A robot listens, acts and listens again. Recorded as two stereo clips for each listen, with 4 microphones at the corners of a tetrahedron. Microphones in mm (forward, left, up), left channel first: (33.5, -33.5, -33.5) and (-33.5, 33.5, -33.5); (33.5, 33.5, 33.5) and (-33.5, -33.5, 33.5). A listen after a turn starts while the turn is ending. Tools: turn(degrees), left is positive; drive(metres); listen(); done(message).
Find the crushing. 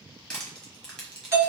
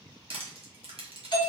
turn(degrees=-130)
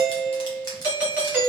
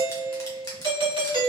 done("Found it: crushing, straight ahead, 1 to 2 m away.")